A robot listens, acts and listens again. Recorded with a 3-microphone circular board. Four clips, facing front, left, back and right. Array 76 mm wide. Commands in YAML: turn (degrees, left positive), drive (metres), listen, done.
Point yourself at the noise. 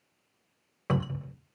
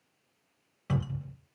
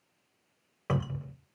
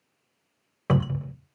turn: -85
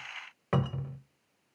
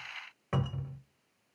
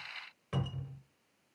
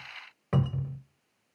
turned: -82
done: "Facing the cupboard door."